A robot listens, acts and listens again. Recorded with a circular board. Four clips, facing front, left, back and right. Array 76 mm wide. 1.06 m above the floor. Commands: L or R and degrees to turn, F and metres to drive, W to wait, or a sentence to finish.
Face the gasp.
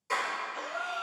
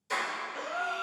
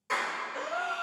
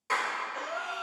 L175
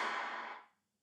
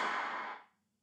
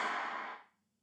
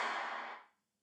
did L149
L25
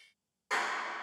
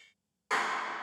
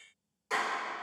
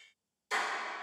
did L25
Facing where the gasp came from. I can't hear it now.